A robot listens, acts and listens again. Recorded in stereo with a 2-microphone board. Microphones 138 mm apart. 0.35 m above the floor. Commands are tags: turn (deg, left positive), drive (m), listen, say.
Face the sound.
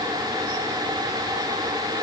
<listen/>
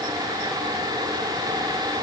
<listen/>
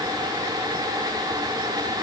<say>I can't make out anything.</say>